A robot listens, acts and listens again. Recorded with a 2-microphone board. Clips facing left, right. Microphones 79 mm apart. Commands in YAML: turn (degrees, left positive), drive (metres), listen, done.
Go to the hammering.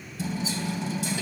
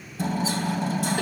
turn: -45
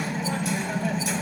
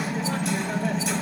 drive: 1.0
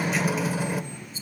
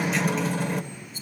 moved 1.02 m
drive: 1.0
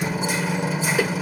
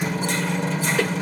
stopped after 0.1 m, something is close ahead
done: "Arrived at the hammering, straight ahead."